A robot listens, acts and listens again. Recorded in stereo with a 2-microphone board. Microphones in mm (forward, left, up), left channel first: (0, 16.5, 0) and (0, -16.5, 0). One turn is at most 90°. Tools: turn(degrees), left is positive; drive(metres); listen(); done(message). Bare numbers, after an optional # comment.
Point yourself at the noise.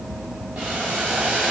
turn(-90)
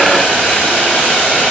# So it is at 10° left.
turn(10)
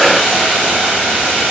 done("Facing the boiling, over 4 m away.")